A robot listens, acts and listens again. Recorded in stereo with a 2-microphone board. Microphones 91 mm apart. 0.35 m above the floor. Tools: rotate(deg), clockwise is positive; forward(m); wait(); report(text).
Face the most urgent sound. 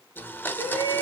rotate(-65)
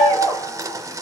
rotate(-45)
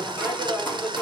rotate(-25)
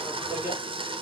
rotate(15)
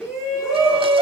report("Found it: a shout, straight ahead, 2 to 4 m away.")